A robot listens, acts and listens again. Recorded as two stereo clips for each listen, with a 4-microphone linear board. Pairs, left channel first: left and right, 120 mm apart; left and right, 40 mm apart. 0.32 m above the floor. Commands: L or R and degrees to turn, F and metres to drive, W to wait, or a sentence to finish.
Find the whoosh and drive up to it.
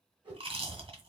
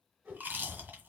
R40
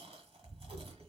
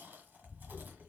W
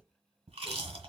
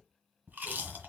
W
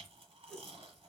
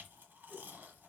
F1.0
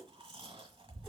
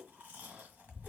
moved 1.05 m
W
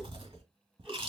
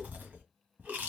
W
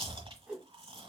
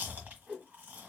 R10
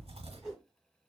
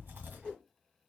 F1.0
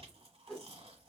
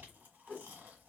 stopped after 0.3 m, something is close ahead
Arrived at the whoosh, straight ahead.